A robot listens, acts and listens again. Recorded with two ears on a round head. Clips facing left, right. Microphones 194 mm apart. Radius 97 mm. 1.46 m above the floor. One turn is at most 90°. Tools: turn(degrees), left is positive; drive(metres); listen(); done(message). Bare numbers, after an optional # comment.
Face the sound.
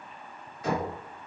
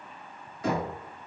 # The knocking: about 65° right or 115° right.
turn(-65)
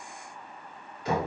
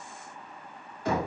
# So it is at 45° right.
turn(-45)
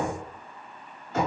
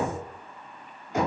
# The knocking is now 15° right.
turn(-15)
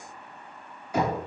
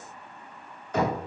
# The knocking is now 10° left.
turn(10)
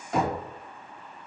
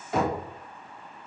done("Facing the knocking, 2 to 4 m away.")